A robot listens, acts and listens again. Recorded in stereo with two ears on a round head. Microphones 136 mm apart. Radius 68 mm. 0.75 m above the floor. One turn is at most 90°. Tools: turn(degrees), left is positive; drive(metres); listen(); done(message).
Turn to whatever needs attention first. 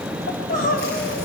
turn(degrees=65)
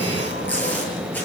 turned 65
listen()
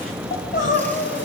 turn(degrees=55)
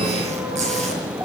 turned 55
listen()
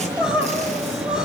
done("Facing the crying.")